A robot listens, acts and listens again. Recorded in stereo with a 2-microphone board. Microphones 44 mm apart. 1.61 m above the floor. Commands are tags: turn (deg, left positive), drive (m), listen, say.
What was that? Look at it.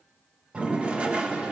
<turn deg="-25"/>
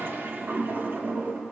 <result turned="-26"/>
<turn deg="-125"/>
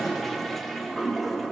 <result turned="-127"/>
<say>Found it: a toilet flushing, straight ahead.</say>